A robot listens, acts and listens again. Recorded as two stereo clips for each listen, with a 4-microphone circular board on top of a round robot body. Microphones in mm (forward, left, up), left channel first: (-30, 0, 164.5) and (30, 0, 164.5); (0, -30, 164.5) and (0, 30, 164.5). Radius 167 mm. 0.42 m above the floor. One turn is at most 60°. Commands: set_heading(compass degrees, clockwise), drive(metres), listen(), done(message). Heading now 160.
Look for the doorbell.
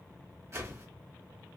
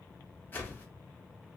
listen()
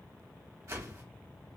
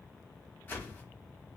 listen()
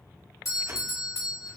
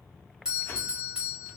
set_heading(100)
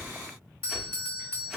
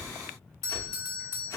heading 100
set_heading(40)
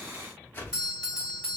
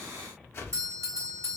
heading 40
set_heading(340)
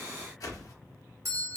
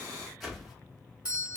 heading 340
set_heading(320)
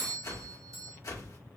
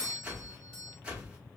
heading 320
done("Facing the doorbell.")